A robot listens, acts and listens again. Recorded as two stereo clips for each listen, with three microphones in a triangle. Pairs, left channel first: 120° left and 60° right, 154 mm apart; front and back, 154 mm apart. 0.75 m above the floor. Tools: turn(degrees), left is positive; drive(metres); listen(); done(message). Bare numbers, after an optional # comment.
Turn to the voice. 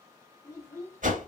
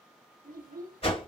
# The child speaking: 170° right.
turn(-170)
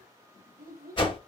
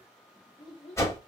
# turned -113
# The child speaking is now 55° right.
turn(-55)
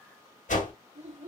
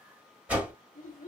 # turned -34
# The child speaking is now 20° right.
turn(-20)
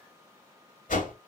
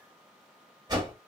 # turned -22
listen()
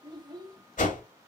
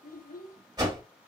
done("Facing the child speaking.")